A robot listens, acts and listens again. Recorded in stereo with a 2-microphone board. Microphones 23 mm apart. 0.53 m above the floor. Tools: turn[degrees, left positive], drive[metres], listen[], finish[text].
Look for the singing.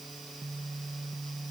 Action: listen[]
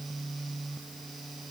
Action: listen[]
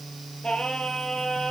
Thought: The singing: about 40° left or 140° left.
Action: turn[40]
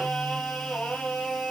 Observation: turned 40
Thought: So it is at 100° left.
Action: turn[100]
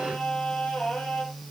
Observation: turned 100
Thought: The singing is now 45° left.
Action: turn[45]
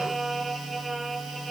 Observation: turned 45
Action: finish[Found it: singing, straight ahead, over 4 m away.]